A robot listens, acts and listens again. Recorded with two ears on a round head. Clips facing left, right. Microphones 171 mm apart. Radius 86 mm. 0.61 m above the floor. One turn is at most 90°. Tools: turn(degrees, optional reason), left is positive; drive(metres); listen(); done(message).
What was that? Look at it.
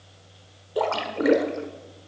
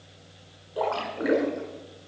turn(degrees=60, reason="The splash: about 60° left or 120° left.")
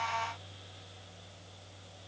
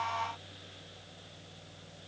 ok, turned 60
listen()
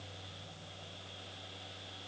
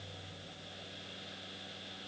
done("I heard a splash, but can't make it out now. It was about straight ahead or 60° left.")